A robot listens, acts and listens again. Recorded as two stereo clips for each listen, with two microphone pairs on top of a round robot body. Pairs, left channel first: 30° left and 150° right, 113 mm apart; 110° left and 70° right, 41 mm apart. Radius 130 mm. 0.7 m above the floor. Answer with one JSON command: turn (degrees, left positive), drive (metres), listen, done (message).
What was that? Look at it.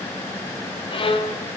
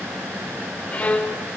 {"turn": 55}
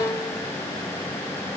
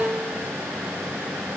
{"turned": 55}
{"turn": -20}
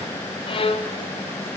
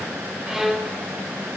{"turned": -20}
{"done": "Facing the violin, 1 to 2 m away."}